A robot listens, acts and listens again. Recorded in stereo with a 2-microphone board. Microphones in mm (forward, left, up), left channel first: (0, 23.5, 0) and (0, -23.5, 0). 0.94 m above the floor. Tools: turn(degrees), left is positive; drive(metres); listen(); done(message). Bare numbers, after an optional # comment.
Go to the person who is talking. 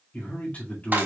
# The man speaking: about 30° left or 150° left.
turn(30)
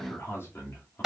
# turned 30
# So it is at 120° left.
turn(120)
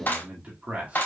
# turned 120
# The man speaking is now 30° right.
turn(-30)
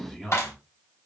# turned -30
drive(1.0)
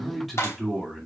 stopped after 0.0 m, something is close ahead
done("Something is in my way. I am facing the man speaking but have not reached it.")